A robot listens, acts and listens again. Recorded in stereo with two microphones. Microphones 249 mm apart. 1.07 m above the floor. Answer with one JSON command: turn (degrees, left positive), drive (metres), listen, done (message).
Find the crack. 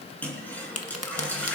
{"turn": 75}
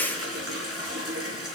{"listen": true}
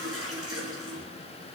{"done": "I heard a crack, but can't make it out now. It was about straight ahead or 30° left."}